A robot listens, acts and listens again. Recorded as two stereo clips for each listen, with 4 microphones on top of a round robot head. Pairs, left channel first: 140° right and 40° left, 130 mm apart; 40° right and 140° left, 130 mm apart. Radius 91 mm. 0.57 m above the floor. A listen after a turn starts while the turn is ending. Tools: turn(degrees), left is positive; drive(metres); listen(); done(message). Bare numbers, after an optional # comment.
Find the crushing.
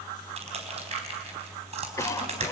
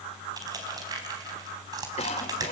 # The crushing: 80° left.
turn(80)
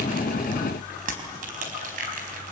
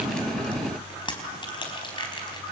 # The crushing is now 15° left.
turn(15)
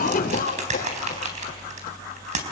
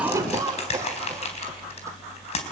done("Found it: crushing, straight ahead, over 4 m away.")